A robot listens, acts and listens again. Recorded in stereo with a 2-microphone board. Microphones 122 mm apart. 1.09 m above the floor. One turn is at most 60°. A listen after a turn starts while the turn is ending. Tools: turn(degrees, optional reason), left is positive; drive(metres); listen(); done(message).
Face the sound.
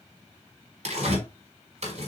turn(degrees=-60, reason="The tearing paper: about 70° right or 110° right.")
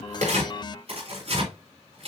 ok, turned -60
turn(degrees=-55, reason="So it is at 55° right.")
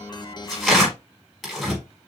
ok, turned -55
done("Facing the tearing paper, over 4 m away.")